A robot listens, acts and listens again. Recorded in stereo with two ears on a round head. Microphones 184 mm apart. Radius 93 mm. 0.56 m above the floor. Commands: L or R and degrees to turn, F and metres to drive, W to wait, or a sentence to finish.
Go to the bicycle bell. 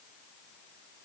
W
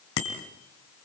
L65
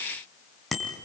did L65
F1.0
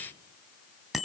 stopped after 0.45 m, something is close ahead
Something is in my way. I am facing the bicycle bell but have not reached it.